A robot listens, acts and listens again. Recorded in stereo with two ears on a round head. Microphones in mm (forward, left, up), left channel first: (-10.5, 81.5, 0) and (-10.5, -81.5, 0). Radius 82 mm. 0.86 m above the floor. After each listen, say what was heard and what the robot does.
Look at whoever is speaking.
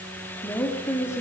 The woman speaking: about 15° left or 165° left. Turn 15° left.
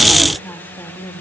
The woman speaking: about 15° left or 165° left. Turn 15° left.
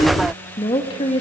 The woman speaking: about 30° left or 150° left. Turn 30° left.
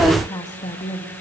The woman speaking: about 30° left or 150° left. Turn 30° left.
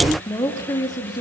The woman speaking: about 25° left or 155° left. Turn 25° left.
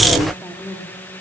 Found it: a woman speaking, straight ahead, 2 to 4 m away.